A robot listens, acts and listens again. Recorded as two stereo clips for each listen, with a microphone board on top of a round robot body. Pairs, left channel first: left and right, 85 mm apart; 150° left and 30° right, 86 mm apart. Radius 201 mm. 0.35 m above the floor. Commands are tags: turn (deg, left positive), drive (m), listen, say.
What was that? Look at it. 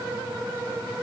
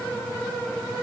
<listen/>
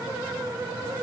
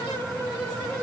<listen/>
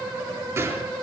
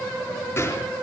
<turn deg="-145"/>
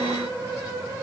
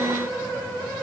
<say>I heard a gunshot from this way, but can't make it out now.</say>